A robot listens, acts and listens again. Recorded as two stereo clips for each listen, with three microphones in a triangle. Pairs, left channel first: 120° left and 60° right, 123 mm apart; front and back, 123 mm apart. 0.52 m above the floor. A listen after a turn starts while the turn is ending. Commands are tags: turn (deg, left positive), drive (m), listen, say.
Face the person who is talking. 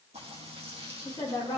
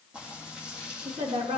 <turn deg="175"/>
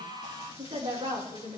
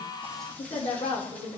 <turn deg="-10"/>
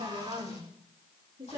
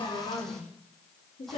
<say>Found it: a woman speaking, straight ahead.</say>